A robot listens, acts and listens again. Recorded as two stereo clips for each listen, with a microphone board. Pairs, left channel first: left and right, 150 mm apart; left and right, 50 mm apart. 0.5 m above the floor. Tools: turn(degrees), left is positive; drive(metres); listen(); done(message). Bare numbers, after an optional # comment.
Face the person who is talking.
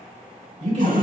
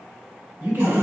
# The man speaking: about 55° right or 125° right.
turn(-55)
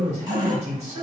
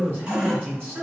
# So it is at 55° right.
turn(-55)
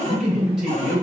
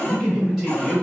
done("Found it: a man speaking, straight ahead.")